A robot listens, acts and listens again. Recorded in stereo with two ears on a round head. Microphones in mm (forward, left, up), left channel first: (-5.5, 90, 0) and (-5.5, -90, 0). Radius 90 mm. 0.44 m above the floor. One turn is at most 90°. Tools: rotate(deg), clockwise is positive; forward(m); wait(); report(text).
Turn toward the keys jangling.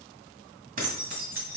rotate(50)
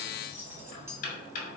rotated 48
rotate(15)
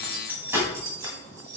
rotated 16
rotate(20)
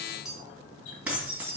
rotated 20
rotate(10)
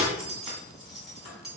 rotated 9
report("Found it: keys jangling, straight ahead, 2 to 4 m away.")